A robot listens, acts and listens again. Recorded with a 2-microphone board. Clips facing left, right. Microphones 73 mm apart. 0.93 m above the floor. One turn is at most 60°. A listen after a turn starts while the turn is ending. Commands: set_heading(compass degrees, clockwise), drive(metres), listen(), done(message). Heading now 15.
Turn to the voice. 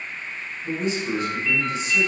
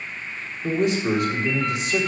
set_heading(75)
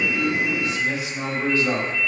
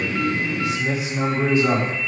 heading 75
set_heading(95)
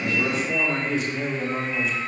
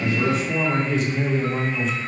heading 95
done("Facing the man speaking, 2 to 4 m away.")